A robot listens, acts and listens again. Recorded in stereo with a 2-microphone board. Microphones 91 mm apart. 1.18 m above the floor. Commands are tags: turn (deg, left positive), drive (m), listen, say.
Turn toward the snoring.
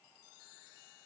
<listen/>
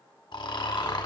<turn deg="60"/>
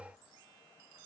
<listen/>
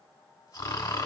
<turn deg="45"/>
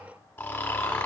<turn deg="25"/>
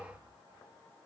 <listen/>
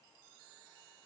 <listen/>
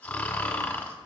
<turn deg="20"/>
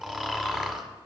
<say>Facing the snoring.</say>